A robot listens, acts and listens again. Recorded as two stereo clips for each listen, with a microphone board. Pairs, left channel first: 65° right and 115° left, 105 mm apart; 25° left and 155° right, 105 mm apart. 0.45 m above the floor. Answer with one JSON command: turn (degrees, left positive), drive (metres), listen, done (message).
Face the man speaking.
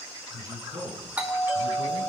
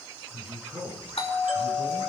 {"turn": 160}
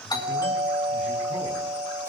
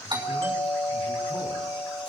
{"listen": true}
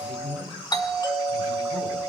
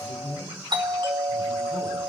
{"turn": 40}
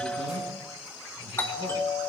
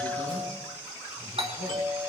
{"listen": true}
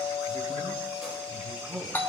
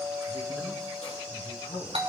{"turn": 25}
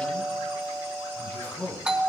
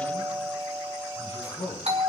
{"done": "Found it: a man speaking, straight ahead, over 4 m away."}